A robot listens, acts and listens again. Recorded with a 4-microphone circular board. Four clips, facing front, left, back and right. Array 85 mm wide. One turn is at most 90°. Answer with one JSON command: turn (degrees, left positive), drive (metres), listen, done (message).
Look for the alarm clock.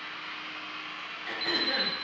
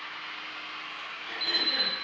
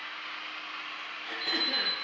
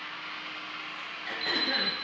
{"turn": 25}
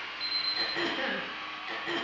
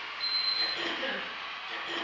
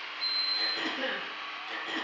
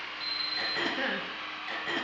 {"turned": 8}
{"turn": 15}
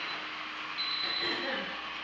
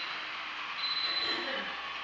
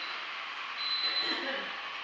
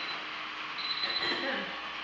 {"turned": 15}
{"done": "Found it: an alarm clock, straight ahead."}